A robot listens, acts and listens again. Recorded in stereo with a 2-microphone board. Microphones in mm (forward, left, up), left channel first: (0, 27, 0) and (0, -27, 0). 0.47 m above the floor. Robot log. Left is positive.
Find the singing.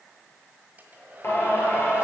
note: The singing: about 60° left or 120° left.
cmd yaw +60
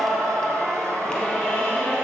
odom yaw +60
note: So it is at 25° left.
cmd yaw +25
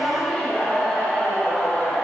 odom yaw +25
note: The singing is now 15° left.
cmd yaw +15
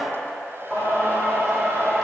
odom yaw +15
end: Found it: singing, straight ahead, 2 to 4 m away.